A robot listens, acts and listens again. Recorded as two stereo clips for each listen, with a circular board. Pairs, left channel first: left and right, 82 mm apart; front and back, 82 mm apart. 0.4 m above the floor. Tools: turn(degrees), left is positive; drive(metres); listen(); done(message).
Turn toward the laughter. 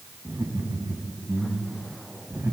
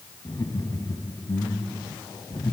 turn(degrees=-35)
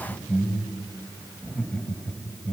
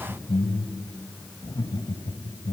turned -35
turn(degrees=15)
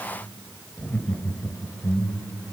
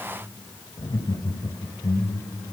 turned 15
turn(degrees=30)
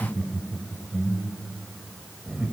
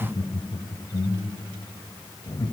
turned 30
turn(degrees=-10)
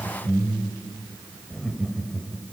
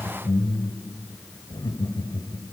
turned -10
done("Found it: laughter, straight ahead, 2 to 4 m away.")